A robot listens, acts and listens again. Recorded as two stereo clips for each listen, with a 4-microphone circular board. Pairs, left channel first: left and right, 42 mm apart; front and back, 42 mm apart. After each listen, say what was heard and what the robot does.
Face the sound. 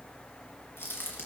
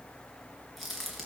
The crack: 95° left. Turn 95° left.
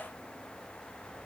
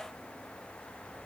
I heard a crack from this way, but can't make it out now.